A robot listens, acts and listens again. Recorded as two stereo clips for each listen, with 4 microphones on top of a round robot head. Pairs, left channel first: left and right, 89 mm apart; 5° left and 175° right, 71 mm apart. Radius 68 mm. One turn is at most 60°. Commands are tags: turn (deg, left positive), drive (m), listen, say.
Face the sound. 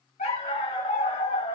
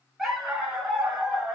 <turn deg="60"/>
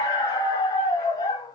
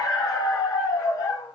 <turn deg="40"/>
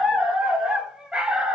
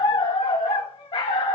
<turn deg="-10"/>
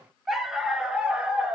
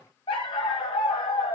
<turn deg="-10"/>
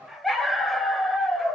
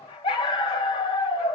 <say>Facing the dog barking.</say>